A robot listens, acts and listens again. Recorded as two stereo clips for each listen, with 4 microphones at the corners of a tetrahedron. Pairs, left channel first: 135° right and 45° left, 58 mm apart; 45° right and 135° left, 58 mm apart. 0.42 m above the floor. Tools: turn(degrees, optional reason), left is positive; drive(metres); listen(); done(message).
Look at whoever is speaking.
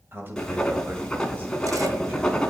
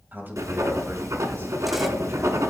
turn(degrees=90, reason="The man speaking: 90° left.")
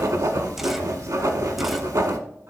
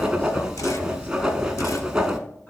listen()
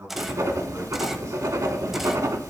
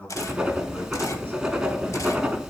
turn(degrees=15, reason="The man speaking is now 15° left.")
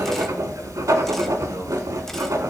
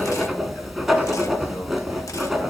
listen()
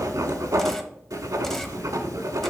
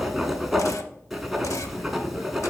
listen()
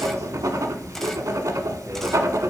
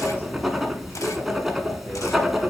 done("Facing where the man speaking came from. I can't hear it now.")